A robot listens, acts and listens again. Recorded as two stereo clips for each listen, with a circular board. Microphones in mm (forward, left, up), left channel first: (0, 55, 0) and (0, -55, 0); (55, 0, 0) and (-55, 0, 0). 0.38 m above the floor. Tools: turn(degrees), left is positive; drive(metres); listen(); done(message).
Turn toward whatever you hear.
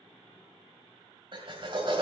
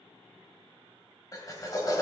turn(degrees=-55)
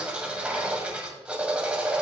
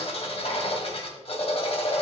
turn(degrees=-10)
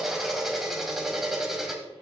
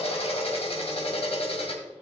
done("Found it: a drill, straight ahead.")